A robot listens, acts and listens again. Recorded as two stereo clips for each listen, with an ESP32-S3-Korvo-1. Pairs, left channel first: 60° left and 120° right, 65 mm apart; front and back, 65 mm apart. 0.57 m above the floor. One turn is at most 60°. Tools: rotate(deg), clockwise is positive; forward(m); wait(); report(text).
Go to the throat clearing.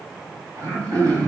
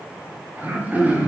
rotate(60)
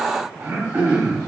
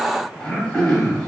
rotate(60)
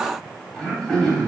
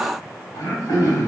rotate(25)
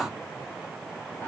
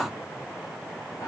forward(1.0)
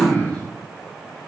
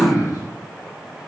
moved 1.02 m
rotate(10)
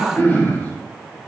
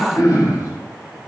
forward(1.0)
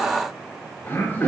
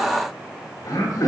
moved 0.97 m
forward(1.0)
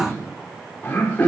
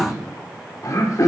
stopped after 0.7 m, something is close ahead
report("I am next to the throat clearing.")